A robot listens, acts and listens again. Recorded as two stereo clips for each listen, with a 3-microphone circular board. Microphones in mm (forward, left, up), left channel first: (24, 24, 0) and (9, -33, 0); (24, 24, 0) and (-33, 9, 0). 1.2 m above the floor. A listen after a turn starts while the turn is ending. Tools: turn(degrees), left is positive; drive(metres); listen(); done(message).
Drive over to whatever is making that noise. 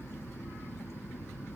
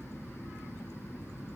listen()
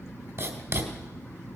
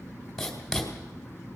turn(degrees=-70)
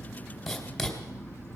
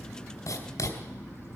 turn(degrees=-10)
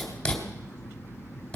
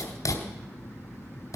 drive(metres=1.0)
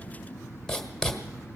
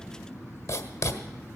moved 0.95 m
turn(degrees=-10)
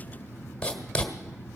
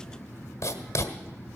drive(metres=1.0)
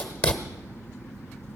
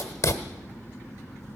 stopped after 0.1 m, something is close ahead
done("I am next to the writing.")